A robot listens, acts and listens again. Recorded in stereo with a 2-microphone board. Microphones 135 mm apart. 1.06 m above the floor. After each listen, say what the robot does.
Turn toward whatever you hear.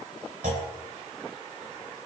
Turn 90° right.
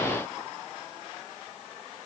I heard a clunk from this way, but can't make it out now.